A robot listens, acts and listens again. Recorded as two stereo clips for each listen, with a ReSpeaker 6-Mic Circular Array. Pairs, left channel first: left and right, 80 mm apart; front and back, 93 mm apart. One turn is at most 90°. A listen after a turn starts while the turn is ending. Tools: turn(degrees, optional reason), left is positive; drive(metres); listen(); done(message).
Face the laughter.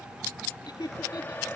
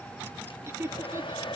turn(degrees=90, reason="The laughter: 120° left.")
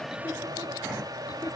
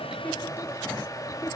turn(degrees=30, reason="Nothing new. It was at 30° left.")
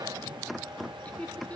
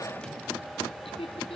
turn(degrees=15, reason="The laughter is now 15° left.")
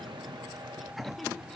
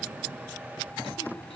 listen()
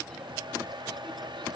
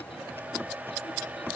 listen()
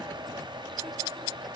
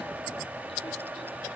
done("Facing where the laughter came from. I can't hear it now.")